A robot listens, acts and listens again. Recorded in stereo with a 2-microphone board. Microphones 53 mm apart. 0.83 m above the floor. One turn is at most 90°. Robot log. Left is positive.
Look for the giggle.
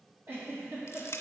note: The giggle: about 50° right or 130° right.
cmd yaw -50
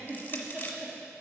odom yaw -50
note: So it is at 10° right.
cmd yaw -10
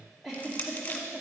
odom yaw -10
end: Facing the giggle, 2 to 4 m away.